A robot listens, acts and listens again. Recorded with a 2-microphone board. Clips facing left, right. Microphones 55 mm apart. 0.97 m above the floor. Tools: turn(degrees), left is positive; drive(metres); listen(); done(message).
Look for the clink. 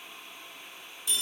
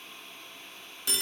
listen()
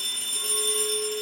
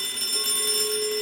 turn(degrees=-35)
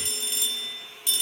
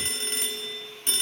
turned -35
listen()
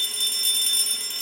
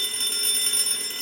listen()
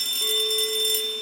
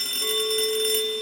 done("Found it: a clink, straight ahead.")